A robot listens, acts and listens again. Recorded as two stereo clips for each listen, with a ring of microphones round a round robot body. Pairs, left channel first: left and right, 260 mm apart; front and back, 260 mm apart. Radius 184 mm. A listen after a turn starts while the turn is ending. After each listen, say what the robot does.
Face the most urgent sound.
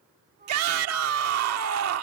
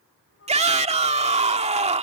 Turn 115° right.
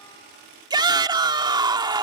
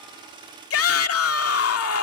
Turn 20° right.
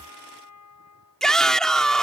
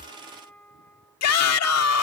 Facing the shout.